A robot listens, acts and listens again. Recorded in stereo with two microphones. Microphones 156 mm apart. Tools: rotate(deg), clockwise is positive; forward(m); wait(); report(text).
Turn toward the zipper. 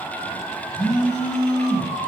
wait()
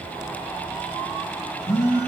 wait()
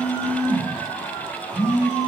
report("I can't make out a zipper to turn to.")